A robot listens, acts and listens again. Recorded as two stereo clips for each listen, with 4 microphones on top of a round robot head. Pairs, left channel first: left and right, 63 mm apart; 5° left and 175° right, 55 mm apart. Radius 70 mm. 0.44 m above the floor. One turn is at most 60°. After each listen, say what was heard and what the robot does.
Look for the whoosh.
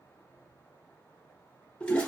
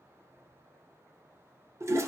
Keep listening.
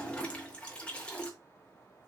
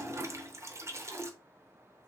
Keep listening.
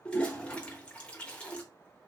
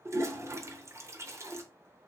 I can't make out a whoosh to turn to.